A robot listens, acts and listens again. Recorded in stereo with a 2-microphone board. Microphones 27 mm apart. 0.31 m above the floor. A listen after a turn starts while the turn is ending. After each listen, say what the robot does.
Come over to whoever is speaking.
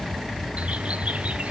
Keep listening.
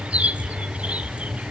Keep listening.
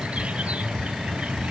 I can't make out anyone speaking, only a bird.